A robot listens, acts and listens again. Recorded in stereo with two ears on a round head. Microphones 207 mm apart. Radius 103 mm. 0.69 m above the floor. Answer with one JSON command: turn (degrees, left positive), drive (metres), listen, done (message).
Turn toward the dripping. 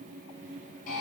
{"listen": true}
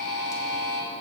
{"listen": true}
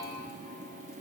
{"done": "I can't make out dripping, only a buzzer."}